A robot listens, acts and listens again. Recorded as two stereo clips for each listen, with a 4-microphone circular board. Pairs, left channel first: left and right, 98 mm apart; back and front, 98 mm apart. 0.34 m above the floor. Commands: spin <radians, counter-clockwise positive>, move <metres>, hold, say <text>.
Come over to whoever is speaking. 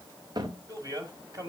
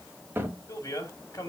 spin -2.27
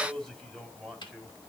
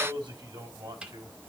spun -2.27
spin 0.17
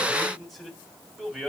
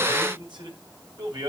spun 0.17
move 1.0
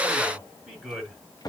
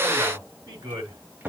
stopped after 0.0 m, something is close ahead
say Blocked. The man speaking is further on, straight ahead.